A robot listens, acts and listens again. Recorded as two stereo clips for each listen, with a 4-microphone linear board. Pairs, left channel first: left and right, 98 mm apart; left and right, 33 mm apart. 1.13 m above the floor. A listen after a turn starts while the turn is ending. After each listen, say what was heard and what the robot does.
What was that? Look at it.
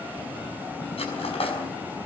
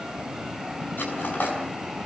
Turn 90° left.
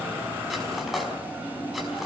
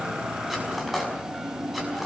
Facing the cutlery clinking.